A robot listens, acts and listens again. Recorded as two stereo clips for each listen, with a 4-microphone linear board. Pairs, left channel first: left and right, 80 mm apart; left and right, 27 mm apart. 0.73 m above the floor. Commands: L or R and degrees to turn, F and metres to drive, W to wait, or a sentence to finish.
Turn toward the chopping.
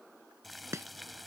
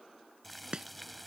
R35
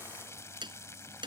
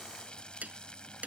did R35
R105
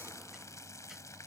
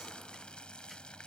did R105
W
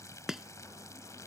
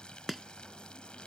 Found it: chopping, straight ahead.